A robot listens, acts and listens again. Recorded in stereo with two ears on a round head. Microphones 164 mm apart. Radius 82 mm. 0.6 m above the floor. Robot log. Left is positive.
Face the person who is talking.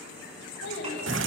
note: The child speaking: about 70° left or 110° left.
cmd yaw +70
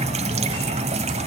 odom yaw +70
cmd idle
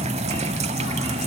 cmd idle
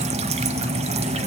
end: I heard a child speaking, but can't make it out now. It was about straight ahead or 40° left.